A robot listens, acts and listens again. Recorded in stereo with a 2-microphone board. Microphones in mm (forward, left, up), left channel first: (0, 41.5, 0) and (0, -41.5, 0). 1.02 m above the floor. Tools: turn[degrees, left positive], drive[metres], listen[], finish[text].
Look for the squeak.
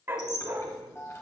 Thought: The squeak: about 35° left or 145° left.
Action: turn[35]
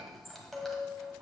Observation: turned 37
Action: finish[Found it: a squeak, straight ahead.]